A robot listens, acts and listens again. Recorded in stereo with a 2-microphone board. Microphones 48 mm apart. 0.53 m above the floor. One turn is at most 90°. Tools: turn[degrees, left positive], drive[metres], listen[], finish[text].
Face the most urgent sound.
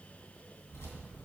Action: listen[]
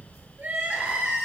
Thought: The crying: about 25° right or 155° right.
Action: turn[-25]
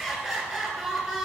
Action: finish[Found it: crying, straight ahead, 2 to 4 m away.]